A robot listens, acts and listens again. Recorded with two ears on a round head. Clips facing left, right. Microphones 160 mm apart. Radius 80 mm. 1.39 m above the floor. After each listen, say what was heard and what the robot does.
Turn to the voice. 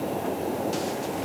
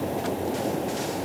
Keep listening.
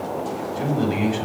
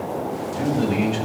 Turn 30° left.
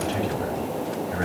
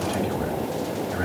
So it is at 145° left. Turn 145° left.
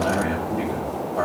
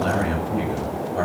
The man speaking is now 30° right. Turn 30° right.
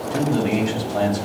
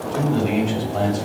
The man speaking is now 15° left. Turn 15° left.
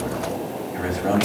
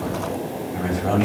The man speaking is now 10° left. Turn 10° left.
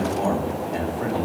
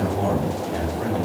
Facing the man speaking, over 4 m away.